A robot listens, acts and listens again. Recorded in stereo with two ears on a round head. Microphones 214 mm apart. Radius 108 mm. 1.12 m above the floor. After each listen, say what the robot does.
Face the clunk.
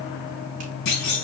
Turn 70° left.
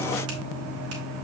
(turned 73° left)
Keep listening.
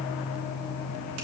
I heard a clunk, but can't make it out now. It was about 5° right or 40° left.